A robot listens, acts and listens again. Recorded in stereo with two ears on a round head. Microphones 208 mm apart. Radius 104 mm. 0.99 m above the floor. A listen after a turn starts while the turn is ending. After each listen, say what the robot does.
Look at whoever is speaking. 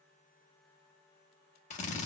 Keep listening.
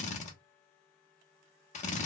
Keep listening.
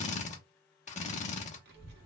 Turn 45° right.
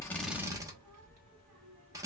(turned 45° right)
Turn 85° right.
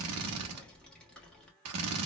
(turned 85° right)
Found it: a child speaking, straight ahead.